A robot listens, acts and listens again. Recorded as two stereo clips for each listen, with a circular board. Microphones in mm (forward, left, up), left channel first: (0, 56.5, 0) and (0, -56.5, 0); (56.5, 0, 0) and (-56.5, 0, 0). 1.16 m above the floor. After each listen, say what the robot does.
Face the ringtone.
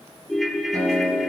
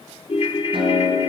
Found it: a ringtone, straight ahead.